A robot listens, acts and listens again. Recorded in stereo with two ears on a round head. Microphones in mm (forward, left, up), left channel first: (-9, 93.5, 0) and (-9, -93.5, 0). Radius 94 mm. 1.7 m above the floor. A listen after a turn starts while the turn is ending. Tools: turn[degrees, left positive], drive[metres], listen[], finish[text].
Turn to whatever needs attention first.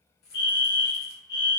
Thought: The fire alarm: about 50° left or 130° left.
Action: turn[50]
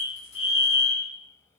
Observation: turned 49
Thought: So it is at 65° left.
Action: turn[65]
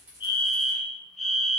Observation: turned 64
Action: finish[Found it: a fire alarm, straight ahead, under 1 m away.]